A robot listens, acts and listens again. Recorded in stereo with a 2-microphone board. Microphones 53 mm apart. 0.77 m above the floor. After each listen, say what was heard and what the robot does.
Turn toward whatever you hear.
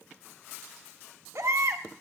The baby crying: about 65° right or 115° right. Turn 65° right.
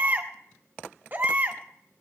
So it is at 45° right. Turn 45° right.
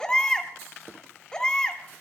The baby crying is now 10° left. Turn 10° left.
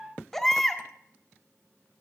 Found it: a baby crying, straight ahead, 1 to 2 m away.